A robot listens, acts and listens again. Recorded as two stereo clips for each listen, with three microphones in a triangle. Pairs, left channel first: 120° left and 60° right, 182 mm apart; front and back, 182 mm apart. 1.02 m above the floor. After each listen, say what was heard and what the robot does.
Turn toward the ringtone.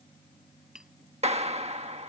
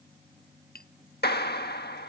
Keep listening.
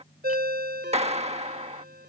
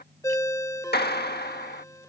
The ringtone: 70° right. Turn 70° right.
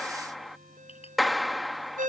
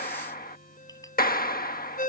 The ringtone is now 30° right. Turn 30° right.
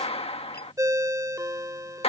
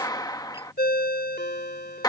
The ringtone is now 10° left. Turn 10° left.
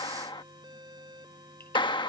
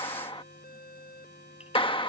Keep listening.
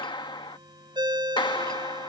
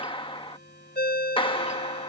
Found it: a ringtone, straight ahead.